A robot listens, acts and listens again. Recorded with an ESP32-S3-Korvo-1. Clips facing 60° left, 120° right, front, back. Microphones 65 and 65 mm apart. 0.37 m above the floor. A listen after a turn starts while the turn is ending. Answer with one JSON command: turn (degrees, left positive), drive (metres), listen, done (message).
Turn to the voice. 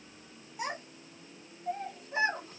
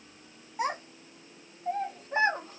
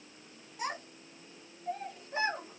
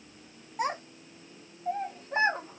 {"turn": -155}
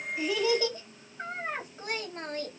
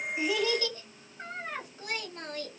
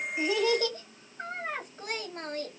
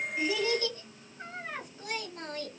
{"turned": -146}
{"turn": 15}
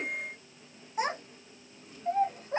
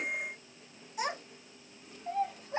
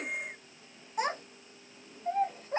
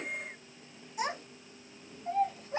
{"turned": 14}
{"turn": 30}
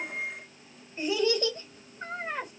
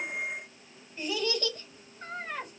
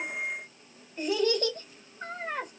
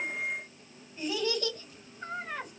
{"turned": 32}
{"done": "Found it: a child speaking, straight ahead, 1 to 2 m away."}